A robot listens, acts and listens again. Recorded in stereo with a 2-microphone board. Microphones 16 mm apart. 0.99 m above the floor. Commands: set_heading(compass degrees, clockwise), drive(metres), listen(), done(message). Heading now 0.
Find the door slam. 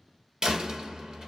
set_heading(60)
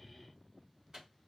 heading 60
listen()
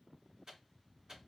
done("I heard a door slam, but can't make it out now. It was about straight ahead or 60° right.")